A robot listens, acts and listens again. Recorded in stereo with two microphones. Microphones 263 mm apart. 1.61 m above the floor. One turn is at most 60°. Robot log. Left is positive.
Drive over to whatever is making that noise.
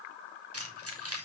note: The keys jangling: about 60° right or 120° right.
cmd yaw -60
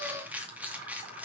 cmd fwd 1.0
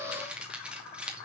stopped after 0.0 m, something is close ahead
end: Something is in my way. I am facing the keys jangling but have not reached it.